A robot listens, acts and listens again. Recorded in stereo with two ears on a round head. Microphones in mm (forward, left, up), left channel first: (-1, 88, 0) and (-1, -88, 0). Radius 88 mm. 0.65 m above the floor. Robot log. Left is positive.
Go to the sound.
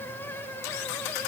cmd idle
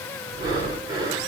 note: The breathing: about 25° right or 155° right.
cmd yaw -25
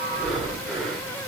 cmd fwd 1.0
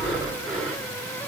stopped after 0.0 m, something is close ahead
end: Blocked. The breathing is further on, straight ahead.